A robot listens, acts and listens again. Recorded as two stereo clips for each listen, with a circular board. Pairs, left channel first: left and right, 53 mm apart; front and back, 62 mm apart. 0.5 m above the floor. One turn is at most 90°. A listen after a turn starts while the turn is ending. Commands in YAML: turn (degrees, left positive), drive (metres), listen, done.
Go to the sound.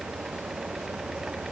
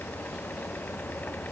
listen: true
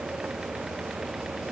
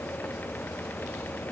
listen: true
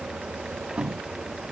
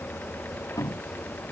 turn: -20
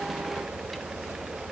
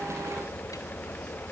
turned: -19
listen: true
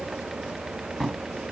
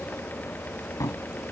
drive: 1.0
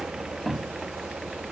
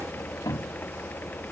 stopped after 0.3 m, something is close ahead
done: "Blocked. The cupboard door is further on, straight ahead."